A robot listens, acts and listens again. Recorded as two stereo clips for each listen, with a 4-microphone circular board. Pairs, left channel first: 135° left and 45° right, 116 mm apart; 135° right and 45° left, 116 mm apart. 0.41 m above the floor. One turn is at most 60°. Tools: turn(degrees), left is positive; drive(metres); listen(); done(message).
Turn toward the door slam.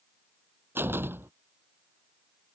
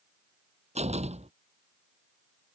turn(degrees=25)
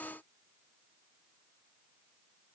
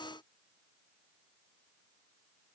done("I heard a door slam from this way, but can't make it out now.")